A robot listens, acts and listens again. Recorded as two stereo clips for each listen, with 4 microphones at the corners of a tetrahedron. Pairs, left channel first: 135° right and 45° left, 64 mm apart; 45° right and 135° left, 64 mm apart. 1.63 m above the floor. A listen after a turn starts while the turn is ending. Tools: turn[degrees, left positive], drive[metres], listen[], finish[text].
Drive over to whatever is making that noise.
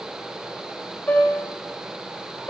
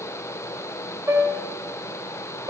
Thought: The piano: 165° left.
Action: turn[165]
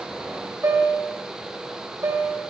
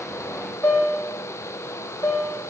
Action: drive[1.0]
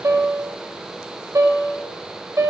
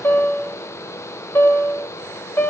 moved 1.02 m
Action: drive[1.0]
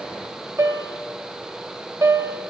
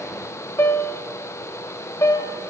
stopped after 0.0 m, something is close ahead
Action: finish[I am next to the piano.]